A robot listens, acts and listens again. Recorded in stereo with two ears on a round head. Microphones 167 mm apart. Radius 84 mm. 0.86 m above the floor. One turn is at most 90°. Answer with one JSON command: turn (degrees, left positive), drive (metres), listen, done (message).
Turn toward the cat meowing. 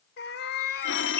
{"turn": 60}
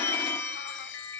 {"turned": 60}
{"listen": true}
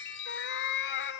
{"turn": 65}
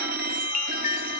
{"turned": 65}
{"listen": true}
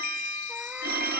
{"listen": true}
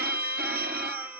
{"done": "Facing where the cat meowing came from. I can't hear it now."}